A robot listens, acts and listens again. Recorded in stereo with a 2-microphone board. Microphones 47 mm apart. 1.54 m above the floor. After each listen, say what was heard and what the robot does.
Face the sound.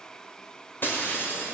The breaking glass: about 50° left or 130° left. Turn 50° left.
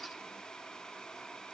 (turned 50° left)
Keep listening.
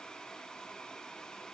I heard breaking glass, but can't make it out now. It was about straight ahead or 80° left.